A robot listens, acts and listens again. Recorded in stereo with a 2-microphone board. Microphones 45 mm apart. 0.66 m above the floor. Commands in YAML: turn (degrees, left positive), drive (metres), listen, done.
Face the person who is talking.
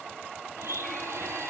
listen: true
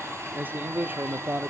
turn: -45
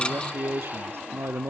turn: -85
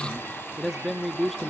done: "Found it: a man speaking, straight ahead, under 1 m away."